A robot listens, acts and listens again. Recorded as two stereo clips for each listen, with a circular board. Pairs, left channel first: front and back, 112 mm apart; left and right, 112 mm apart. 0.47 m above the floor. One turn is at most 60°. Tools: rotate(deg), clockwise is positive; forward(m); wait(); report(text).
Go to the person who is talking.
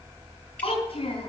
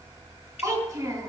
rotate(30)
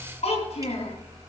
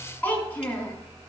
rotate(-15)
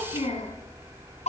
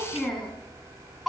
forward(1.0)
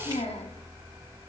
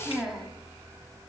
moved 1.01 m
forward(1.0)
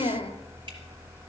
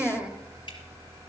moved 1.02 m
rotate(10)
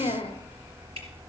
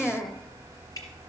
forward(1.0)
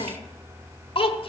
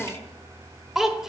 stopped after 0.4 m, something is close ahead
report("I am next to the child speaking.")